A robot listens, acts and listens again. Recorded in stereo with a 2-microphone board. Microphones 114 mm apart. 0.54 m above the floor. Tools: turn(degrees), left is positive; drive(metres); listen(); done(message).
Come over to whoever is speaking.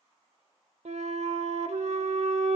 listen()
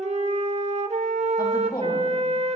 turn(degrees=35)
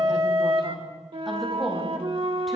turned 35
drive(metres=1.0)
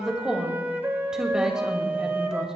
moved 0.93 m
drive(metres=1.0)
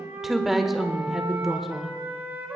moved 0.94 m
drive(metres=1.0)
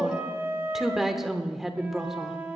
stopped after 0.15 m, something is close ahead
done("I am next to the woman speaking.")